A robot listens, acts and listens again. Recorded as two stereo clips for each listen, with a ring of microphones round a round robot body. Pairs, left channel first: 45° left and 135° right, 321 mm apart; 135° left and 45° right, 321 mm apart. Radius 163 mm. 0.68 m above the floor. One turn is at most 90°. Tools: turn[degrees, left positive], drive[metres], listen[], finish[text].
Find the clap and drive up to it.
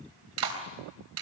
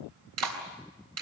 Thought: The clap: 90° right.
Action: turn[-90]
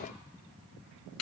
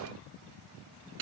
Action: drive[1.0]
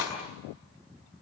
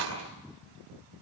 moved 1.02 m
Action: drive[1.0]
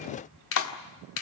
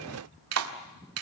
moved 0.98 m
Action: drive[1.0]
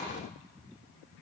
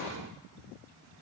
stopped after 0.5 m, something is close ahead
Action: listen[]
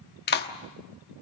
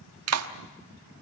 Thought: The clap is now 10° right.
Action: turn[-10]
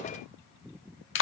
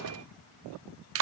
Action: finish[I am next to the clap.]